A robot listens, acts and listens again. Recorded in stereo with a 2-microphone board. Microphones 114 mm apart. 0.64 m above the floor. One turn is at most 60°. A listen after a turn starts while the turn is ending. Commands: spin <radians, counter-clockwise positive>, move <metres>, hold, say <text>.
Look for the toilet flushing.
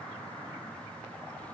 hold
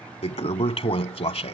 spin 1.05
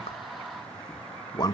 spin 0.70
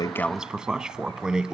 spin -0.17
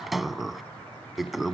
say Facing the toilet flushing.